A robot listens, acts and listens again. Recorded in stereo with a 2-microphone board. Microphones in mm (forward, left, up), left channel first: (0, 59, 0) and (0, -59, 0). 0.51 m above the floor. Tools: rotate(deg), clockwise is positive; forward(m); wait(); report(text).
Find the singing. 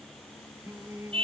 rotate(25)
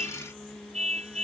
report("Found it: singing, straight ahead.")